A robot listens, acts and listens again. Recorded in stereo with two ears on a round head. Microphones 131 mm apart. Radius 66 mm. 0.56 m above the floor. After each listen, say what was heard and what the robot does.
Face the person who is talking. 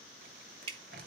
Keep listening.
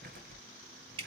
Keep listening.
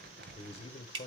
The man speaking: about 40° left or 140° left. Turn 40° left.
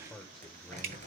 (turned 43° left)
Facing the man speaking, 1 to 2 m away.